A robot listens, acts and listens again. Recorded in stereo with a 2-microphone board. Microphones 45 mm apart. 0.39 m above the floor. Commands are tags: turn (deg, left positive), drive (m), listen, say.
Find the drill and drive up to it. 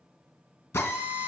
<turn deg="90"/>
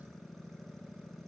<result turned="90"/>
<listen/>
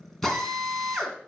<drive m="1.0"/>
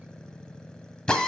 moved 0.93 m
<turn deg="20"/>
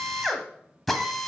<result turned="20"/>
<drive m="1.0"/>
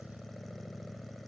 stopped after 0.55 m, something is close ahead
<listen/>
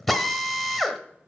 <say>I am next to the drill.</say>